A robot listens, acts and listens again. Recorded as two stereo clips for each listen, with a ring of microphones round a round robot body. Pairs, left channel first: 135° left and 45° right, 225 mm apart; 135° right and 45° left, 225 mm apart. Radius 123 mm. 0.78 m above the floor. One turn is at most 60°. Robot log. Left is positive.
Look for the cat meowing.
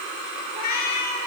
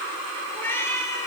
note: The cat meowing: 145° left.
cmd yaw +60
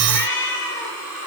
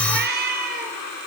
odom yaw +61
note: The cat meowing is now 95° left.
cmd yaw +60
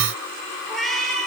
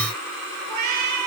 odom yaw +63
note: The cat meowing is now 50° left.
cmd yaw +50
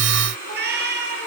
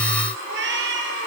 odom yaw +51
end: Found it: a cat meowing, straight ahead.